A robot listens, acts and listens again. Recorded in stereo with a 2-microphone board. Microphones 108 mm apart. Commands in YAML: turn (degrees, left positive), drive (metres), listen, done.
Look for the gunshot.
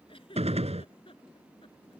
turn: -90
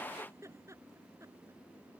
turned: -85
done: "I heard a gunshot from this way, but can't make it out now."